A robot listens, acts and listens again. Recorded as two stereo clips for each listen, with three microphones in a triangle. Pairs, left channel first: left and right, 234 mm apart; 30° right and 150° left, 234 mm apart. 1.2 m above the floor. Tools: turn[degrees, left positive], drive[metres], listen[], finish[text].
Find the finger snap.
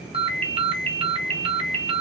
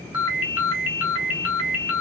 Action: listen[]
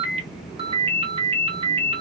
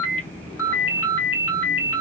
Action: listen[]
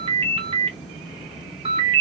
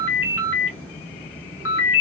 Action: finish[I can't make out a finger snap to turn to.]